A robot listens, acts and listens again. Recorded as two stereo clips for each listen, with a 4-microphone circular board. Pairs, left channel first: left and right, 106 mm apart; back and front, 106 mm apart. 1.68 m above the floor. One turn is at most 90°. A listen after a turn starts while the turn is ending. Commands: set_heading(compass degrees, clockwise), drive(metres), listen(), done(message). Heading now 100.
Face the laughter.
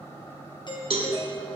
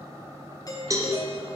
listen()
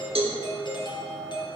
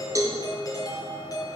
listen()
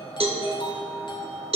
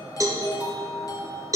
done("I can't make out laughter, only a doorbell and a cowbell.")